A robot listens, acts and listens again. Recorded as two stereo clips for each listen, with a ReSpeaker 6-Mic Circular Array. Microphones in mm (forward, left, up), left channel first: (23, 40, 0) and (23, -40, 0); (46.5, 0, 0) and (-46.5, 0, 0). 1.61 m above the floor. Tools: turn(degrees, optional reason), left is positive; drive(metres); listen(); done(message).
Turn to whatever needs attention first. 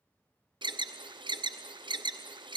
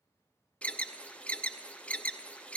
turn(degrees=-75, reason="The alarm: 75° right.")
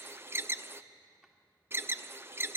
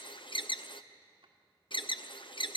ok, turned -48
turn(degrees=-30, reason="The alarm is now 30° right.")
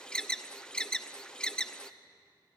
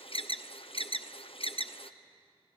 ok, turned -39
turn(degrees=10, reason="The alarm is now 10° left.")
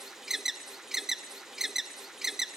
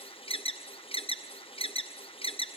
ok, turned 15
done("Found it: an alarm, straight ahead, under 1 m away.")